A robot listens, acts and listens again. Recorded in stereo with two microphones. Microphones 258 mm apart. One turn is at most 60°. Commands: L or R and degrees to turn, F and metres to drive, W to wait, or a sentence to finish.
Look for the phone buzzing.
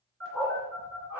R50
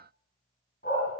W
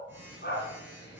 R10
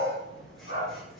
Found it: a phone buzzing, straight ahead.